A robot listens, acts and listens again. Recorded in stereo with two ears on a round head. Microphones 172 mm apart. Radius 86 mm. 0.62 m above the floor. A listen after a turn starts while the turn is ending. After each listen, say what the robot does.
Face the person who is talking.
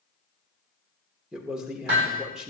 Turn 30° right.
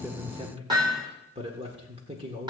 Turn 145° right.
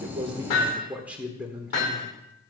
Turn 10° right.
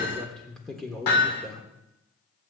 Found it: a man speaking, straight ahead.